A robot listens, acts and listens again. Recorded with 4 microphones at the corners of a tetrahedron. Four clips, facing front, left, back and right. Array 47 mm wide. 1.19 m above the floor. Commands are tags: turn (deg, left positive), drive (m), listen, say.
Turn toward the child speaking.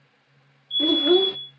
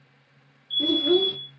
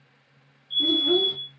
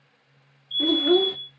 <turn deg="-25"/>
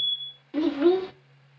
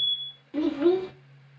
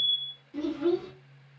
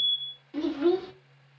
<turn deg="15"/>
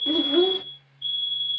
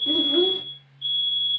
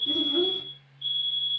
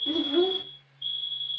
<say>Found it: a child speaking, straight ahead.</say>